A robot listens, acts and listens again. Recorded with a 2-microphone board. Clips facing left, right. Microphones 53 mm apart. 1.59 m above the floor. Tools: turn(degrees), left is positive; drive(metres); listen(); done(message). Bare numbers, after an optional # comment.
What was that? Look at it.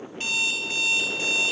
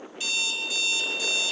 # The alarm clock: about 40° left or 140° left.
turn(40)
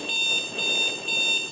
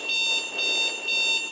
done("Found it: an alarm clock, straight ahead, 1 to 2 m away.")